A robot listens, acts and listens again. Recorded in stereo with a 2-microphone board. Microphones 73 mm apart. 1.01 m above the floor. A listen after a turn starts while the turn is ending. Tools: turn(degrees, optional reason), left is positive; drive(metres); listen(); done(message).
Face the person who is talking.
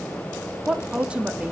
turn(degrees=-30)
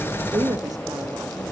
turn(degrees=-130, reason="So it is at 130° right.")
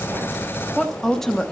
done("Facing the woman speaking.")